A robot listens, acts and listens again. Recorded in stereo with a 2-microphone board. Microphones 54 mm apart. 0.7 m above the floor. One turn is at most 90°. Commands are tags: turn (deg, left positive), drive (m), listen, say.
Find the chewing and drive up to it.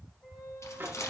<turn deg="65"/>
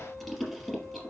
<drive m="1.0"/>
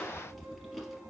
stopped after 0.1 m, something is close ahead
<say>Something is in my way. I am facing the chewing but have not reached it.</say>